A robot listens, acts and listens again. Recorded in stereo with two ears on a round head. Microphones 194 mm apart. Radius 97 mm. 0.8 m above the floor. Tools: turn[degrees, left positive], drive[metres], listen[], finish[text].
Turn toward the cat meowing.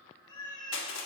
Thought: The cat meowing: about 20° left or 160° left.
Action: turn[20]
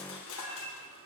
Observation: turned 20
Action: turn[30]
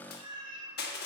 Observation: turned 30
Thought: So it is at 20° right.
Action: turn[-20]
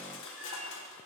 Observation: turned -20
Action: listen[]
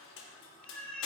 Action: finish[Facing the cat meowing.]